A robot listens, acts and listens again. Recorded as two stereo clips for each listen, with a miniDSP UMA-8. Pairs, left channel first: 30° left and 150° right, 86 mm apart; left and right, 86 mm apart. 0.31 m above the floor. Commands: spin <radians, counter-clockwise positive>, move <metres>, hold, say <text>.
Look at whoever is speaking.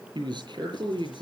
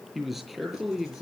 spin 3.14
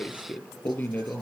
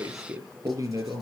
spin -0.70
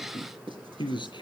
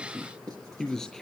say Facing the man speaking, over 4 m away.